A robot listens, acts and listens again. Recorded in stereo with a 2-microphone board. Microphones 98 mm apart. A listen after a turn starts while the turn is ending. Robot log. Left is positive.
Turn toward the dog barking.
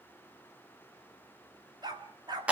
note: The dog barking: about 45° right or 135° right.
cmd yaw -45
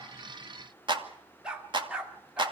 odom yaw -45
note: So it is at 10° right.
cmd yaw -10
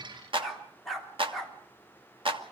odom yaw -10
end: Facing the dog barking.